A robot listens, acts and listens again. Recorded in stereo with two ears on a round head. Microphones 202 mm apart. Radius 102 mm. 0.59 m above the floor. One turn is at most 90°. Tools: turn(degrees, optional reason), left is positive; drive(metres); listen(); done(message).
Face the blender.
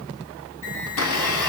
turn(degrees=90)
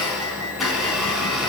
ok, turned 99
done("Found it: a blender, straight ahead, over 4 m away.")